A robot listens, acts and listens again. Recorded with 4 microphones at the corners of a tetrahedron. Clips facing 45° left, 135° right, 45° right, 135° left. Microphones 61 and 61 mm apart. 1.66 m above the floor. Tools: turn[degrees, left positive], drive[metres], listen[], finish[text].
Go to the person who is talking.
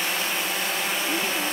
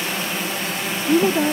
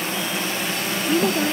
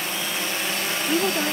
Thought: The woman speaking: 135° right.
Action: turn[-135]
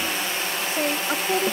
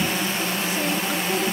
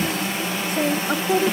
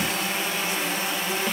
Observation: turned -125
Thought: The woman speaking is now 10° right.
Action: turn[-10]
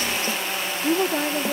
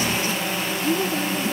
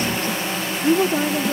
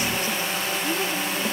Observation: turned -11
Action: drive[1.0]
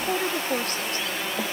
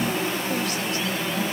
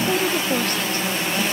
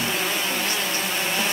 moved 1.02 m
Action: listen[]
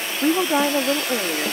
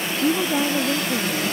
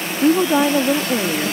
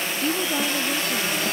Action: drive[1.0]
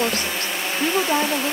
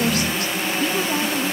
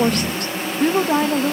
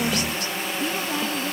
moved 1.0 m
Action: drive[1.0]
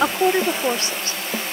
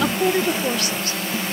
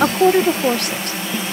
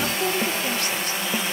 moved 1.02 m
Thought: The woman speaking is now 15° right.
Action: turn[-15]
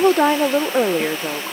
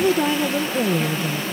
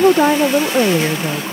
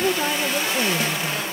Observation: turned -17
Action: drive[1.0]
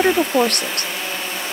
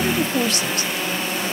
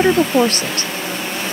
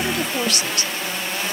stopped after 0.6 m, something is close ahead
Action: finish[I am next to the woman speaking.]